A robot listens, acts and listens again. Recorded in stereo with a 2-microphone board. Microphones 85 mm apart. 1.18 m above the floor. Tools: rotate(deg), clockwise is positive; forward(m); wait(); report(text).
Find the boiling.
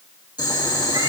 rotate(-60)
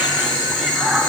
rotate(-60)
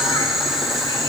report("Facing the boiling.")